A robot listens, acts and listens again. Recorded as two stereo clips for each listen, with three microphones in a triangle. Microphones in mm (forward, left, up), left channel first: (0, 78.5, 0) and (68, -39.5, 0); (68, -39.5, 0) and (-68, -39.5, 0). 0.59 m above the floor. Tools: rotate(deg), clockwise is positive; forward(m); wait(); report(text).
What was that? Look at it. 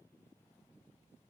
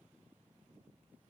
wait()
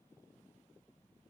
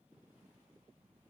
wait()
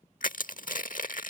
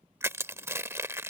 rotate(-110)
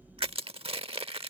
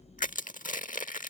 rotate(15)
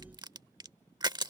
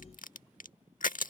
report("Found it: crushing, straight ahead.")